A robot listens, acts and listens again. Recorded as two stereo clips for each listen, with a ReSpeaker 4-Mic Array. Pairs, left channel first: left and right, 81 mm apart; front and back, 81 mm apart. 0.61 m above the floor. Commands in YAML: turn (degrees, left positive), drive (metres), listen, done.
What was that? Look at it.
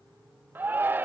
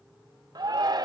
turn: -155
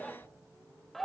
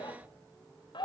done: "Found it: a shout, straight ahead."